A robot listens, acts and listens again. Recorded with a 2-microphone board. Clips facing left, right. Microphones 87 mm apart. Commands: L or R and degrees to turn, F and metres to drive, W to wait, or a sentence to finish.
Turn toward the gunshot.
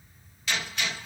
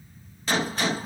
R40
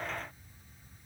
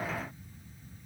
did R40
W
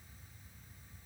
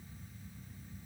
I heard a gunshot, but can't make it out now. It was about straight ahead or 100° right.